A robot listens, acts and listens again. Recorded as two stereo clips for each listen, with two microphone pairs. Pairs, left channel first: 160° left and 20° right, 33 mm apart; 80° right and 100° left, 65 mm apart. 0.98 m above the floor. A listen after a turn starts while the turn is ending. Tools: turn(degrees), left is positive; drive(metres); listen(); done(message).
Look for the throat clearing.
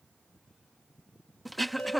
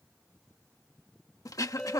turn(degrees=-110)
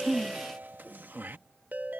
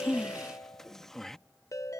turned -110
done("Found it: throat clearing, straight ahead.")